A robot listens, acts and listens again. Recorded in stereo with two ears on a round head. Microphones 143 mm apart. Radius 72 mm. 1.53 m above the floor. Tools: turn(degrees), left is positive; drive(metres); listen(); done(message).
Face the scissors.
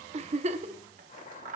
turn(degrees=-50)
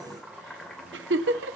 listen()
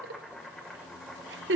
listen()
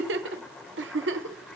done("I heard scissors, but can't make it out now. It was about straight ahead or 80° right.")